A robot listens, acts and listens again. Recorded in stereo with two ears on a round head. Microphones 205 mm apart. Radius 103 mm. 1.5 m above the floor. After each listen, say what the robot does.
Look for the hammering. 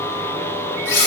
Keep listening.
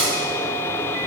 Keep listening.
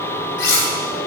I can't make out hammering to turn to.